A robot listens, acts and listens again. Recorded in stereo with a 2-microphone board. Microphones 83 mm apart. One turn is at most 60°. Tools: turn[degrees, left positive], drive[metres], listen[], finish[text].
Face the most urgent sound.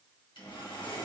Action: listen[]
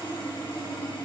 Action: listen[]
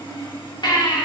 Thought: The baby crying: about 55° left or 125° left.
Action: turn[55]
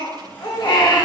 Thought: So it is at 65° left.
Action: turn[60]
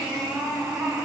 Thought: The baby crying is now 15° right.
Action: turn[-15]
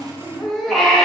Action: finish[Found it: a baby crying, straight ahead.]